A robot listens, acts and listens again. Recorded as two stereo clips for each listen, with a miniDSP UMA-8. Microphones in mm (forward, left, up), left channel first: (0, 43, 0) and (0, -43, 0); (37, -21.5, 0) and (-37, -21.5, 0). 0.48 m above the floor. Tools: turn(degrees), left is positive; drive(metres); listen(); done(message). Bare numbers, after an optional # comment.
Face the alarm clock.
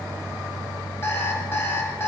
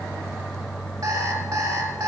# The alarm clock: 150° left.
turn(150)
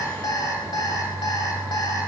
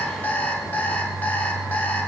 # The alarm clock is now 65° left.
turn(65)
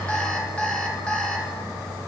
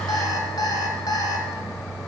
# The alarm clock is now 15° left.
turn(15)
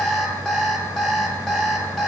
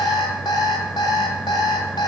done("Found it: an alarm clock, straight ahead, 1 to 2 m away.")